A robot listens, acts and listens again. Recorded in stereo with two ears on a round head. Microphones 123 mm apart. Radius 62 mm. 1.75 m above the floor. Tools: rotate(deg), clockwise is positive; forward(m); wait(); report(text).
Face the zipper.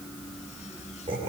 wait()
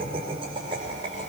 wait()
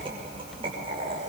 report("I can't make out a zipper to turn to.")